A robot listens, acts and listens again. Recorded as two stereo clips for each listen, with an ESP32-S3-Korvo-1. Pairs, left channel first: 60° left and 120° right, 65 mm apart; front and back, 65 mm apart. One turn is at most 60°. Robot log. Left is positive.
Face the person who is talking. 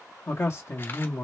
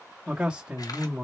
note: The man speaking: 105° left.
cmd yaw +60
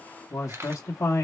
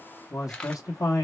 note: The man speaking is now 25° left.
cmd yaw +25
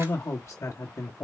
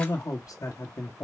note: The man speaking is now 25° left.
cmd yaw +25
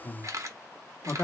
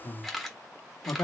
note: The man speaking is now 10° left.
cmd yaw +10
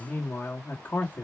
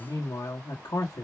end: Facing the man speaking.